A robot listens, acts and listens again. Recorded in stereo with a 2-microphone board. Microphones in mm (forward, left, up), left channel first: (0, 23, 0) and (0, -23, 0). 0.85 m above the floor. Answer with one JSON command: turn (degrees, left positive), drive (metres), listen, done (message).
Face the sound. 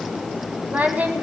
{"turn": -35}
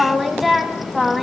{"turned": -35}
{"done": "Facing the singing, 1 to 2 m away."}